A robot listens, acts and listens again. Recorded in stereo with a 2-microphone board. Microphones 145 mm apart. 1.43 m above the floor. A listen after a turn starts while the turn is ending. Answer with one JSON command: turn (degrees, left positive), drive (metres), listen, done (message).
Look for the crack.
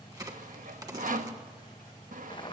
{"turn": -25}
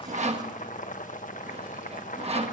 {"listen": true}
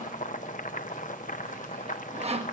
{"done": "I heard a crack, but can't make it out now. It was about straight ahead or 130° right."}